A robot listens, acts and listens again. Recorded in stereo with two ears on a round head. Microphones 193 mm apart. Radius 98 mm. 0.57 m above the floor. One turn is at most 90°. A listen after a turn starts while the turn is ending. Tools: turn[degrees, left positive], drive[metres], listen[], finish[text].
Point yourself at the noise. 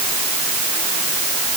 Action: listen[]
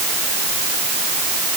Action: listen[]
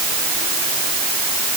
Action: finish[I can't make out anything.]